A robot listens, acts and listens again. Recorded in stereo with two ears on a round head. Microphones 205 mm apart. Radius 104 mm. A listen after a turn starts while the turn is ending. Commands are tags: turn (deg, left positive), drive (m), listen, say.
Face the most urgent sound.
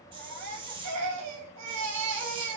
<turn deg="-90"/>
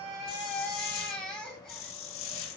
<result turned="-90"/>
<say>Facing the baby crying, 2 to 4 m away.</say>